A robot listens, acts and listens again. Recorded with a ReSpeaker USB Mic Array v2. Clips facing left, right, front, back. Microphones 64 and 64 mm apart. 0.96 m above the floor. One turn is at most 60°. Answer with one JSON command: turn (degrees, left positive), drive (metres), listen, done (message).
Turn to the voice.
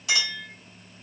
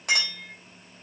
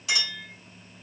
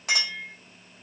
{"listen": true}
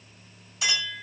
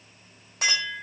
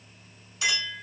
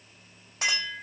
{"listen": true}
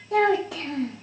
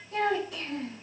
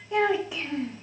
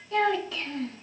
{"turn": 60}
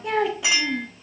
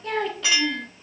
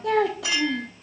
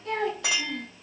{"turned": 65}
{"turn": 10}
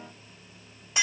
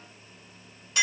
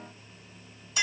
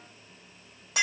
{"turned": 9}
{"listen": true}
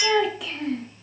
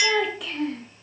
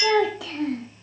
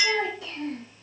{"done": "Facing the child speaking."}